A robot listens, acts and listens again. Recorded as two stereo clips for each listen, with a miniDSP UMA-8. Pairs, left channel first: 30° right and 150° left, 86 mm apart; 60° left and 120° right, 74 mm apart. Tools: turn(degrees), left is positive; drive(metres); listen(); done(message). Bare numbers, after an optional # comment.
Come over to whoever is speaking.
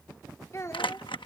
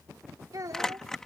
# The child speaking: 85° right.
turn(-85)
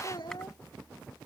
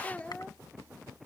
# The child speaking is now 10° right.
turn(-10)
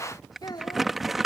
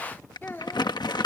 drive(1.0)
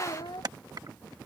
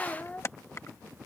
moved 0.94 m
drive(1.0)
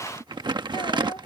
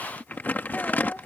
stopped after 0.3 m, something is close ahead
listen()
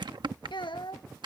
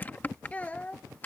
# The child speaking is now 10° right.
turn(-10)
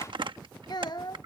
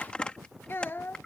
done("I am next to the child speaking.")